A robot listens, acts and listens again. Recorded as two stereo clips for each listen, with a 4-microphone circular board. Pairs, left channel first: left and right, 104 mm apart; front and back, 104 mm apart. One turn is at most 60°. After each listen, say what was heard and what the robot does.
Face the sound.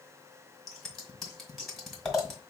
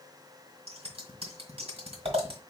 The scissors: straight behind. Turn 60° left.
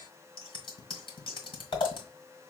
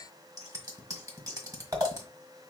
The scissors is now 125° left. Turn 60° left.
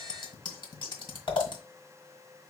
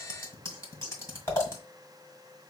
The scissors is now 60° left. Turn 60° left.
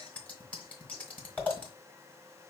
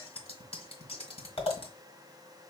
The scissors is now 15° left. Turn 15° left.
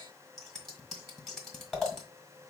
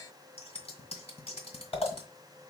Facing the scissors.